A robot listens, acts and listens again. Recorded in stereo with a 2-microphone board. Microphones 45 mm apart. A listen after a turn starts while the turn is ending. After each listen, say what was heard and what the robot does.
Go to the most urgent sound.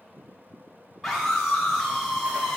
Turn 30° left.
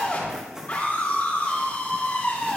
So it is at 145° left. Turn 145° left.
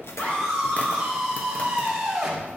The scream is now 10° right. Turn 10° right.
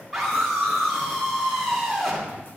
Drive 1.0 m forward.
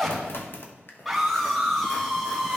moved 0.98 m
Drive 1.0 m forward.
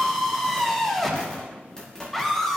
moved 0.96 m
Drive 1.0 m forward.
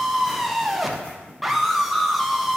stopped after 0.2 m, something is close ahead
I am next to the scream.